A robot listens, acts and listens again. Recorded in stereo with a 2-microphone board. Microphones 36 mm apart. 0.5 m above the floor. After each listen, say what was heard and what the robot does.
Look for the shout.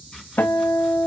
Keep listening.
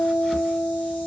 Keep listening.
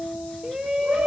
Turn 30° right.
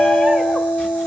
So it is at 15° left. Turn 15° left.
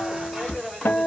Facing the shout.